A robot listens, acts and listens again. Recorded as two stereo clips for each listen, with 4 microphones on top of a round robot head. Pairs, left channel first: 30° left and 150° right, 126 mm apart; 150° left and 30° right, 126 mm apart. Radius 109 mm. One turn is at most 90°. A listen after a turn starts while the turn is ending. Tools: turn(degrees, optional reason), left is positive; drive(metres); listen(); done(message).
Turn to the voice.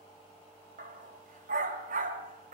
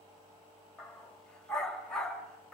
listen()
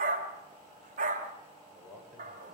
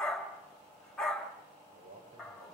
turn(degrees=-60, reason="The man speaking: 60° right.")
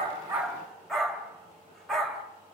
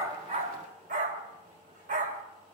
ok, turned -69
turn(degrees=10, reason="Nothing new. It was at 10° left.")
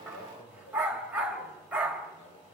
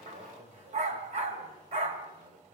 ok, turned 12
done("Found it: a man speaking, straight ahead, over 4 m away.")